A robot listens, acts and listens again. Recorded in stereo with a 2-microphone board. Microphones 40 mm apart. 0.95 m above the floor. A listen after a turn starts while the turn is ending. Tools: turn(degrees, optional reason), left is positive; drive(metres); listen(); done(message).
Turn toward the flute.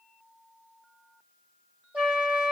turn(degrees=-40, reason="The flute: about 40° right or 140° right.")
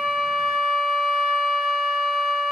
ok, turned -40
done("Facing the flute.")